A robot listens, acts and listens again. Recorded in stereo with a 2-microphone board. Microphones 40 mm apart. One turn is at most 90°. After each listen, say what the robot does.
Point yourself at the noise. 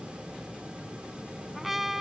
Turn 30° right.
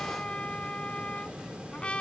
Turn 25° left.
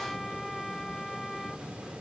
Turn 10° left.
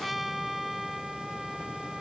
Found it: a trumpet, straight ahead.